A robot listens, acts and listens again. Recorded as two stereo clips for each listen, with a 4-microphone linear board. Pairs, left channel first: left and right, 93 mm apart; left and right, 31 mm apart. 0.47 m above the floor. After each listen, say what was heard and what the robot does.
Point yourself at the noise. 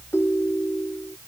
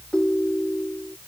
The ringtone: about 30° left or 150° left. Turn 30° left.
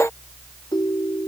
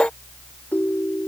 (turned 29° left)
So it is at 120° left. Turn 120° left.
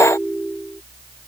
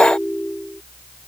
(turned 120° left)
Found it: a ringtone, straight ahead.